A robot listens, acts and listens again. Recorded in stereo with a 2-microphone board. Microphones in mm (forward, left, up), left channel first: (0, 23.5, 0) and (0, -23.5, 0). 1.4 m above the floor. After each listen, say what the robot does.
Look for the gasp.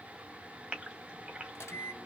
Turn 20° right.
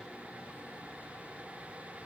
Keep listening.
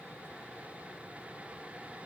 I heard a gasp, but can't make it out now. It was about straight ahead or 140° right.